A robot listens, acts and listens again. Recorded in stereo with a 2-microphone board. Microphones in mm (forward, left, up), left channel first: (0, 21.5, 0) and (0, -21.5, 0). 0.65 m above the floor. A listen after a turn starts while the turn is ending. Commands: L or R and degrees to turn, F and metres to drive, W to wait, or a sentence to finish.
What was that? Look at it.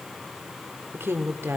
R65
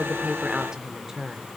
R10
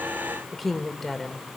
Facing the woman speaking, 2 to 4 m away.